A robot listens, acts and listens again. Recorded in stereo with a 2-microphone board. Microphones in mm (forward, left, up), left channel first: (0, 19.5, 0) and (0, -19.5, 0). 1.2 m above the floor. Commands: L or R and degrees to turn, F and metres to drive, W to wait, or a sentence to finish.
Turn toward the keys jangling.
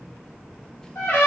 W
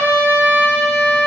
W
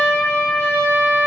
I can't make out keys jangling, only a trumpet.